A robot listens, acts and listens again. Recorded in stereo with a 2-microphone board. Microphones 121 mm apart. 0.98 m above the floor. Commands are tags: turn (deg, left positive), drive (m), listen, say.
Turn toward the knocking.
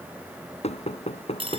<turn deg="55"/>
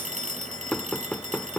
<say>Facing the knocking.</say>